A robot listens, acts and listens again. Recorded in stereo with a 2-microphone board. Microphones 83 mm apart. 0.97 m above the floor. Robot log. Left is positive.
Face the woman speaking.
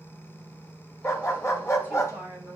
note: The woman speaking: about 20° right or 160° right.
cmd yaw -20
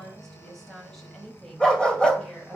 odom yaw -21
end: Facing the woman speaking.